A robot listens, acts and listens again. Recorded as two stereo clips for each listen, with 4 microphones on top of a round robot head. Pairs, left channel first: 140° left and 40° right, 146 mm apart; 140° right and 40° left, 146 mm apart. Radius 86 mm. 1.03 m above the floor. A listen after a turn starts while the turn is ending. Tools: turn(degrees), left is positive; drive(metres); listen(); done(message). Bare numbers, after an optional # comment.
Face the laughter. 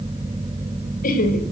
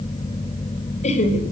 # The laughter: 175° left.
turn(175)
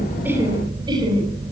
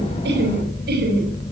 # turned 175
# The laughter is now 20° left.
turn(20)
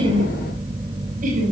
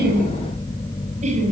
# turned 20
done("Found it: laughter, straight ahead, over 4 m away.")